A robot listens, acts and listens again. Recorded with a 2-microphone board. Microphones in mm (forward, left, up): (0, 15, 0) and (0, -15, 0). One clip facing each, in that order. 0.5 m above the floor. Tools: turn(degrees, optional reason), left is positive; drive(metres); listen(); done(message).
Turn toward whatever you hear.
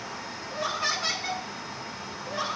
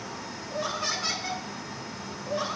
turn(degrees=30)
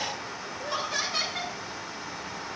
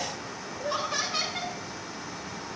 turn(degrees=-20, reason="So it is at 20° right.")
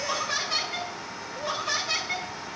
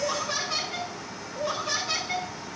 done("Facing the laughter, over 4 m away.")